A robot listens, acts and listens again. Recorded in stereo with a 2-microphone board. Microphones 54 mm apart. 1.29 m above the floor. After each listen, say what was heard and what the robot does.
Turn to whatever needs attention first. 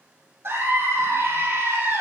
The scream: about 45° right or 135° right. Turn 45° right.
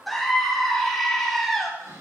Facing the scream, 2 to 4 m away.